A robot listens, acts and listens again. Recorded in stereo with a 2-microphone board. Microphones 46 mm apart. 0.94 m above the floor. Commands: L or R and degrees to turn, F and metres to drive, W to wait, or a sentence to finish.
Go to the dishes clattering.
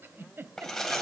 L30
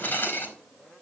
L140
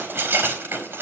R45
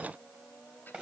W
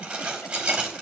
R20
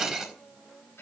F1.0
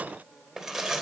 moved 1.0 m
F1.0
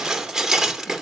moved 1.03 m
R10
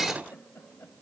F1.0
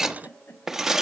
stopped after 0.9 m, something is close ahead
I am next to the dishes clattering.